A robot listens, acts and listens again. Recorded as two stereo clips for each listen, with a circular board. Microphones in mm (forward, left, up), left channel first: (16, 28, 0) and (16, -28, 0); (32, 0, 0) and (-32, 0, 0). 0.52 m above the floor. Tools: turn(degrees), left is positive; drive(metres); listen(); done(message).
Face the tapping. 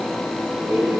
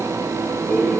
listen()
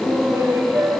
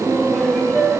listen()
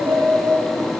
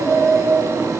done("I can't make out tapping, only laughter.")